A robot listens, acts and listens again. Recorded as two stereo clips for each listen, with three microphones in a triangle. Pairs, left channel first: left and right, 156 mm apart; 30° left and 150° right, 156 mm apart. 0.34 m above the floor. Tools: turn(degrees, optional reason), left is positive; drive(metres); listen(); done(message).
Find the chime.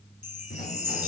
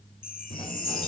turn(degrees=50, reason="The chime: 50° left.")
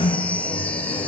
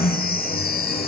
turn(degrees=10, reason="The chime is now 10° left.")
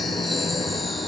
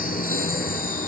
listen()
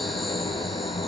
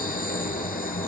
listen()
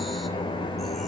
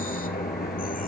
done("Facing where the chime came from. I can't hear it now.")